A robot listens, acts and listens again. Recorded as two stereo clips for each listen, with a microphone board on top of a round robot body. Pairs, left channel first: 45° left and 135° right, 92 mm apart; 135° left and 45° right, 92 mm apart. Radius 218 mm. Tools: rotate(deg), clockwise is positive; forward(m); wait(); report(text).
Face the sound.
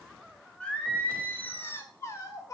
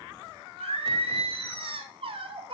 rotate(10)
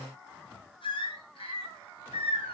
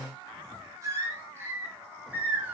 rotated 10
rotate(-30)
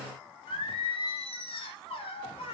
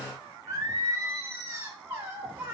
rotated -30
rotate(-25)
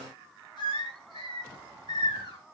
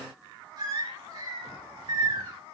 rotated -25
report("Facing the singing.")